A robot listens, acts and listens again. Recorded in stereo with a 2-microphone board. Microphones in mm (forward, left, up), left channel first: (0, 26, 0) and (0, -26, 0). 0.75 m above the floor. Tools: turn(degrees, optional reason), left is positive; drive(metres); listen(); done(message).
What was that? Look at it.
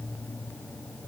listen()
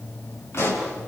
turn(degrees=55, reason="The pop: about 55° left or 125° left.")
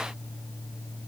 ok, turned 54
listen()
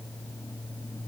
done("I heard a pop, but can't make it out now. It was about straight ahead or 70° left.")